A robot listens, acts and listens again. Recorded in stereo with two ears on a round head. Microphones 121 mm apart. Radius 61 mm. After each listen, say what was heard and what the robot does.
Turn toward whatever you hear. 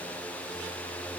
Keep listening.
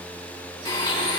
The blender: about 40° left or 140° left. Turn 40° left.
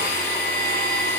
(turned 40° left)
So it is at 100° left. Turn 100° left.
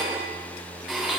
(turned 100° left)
Found it: a blender, straight ahead, 2 to 4 m away.